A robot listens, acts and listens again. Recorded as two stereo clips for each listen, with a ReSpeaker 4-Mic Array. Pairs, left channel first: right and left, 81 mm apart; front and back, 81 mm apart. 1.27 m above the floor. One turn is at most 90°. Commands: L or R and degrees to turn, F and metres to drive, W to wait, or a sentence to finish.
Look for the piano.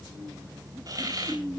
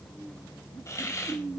W
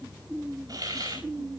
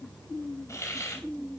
W
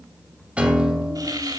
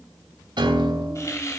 L90
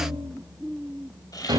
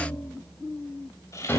L65
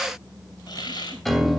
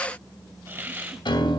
Found it: a piano, straight ahead, 2 to 4 m away.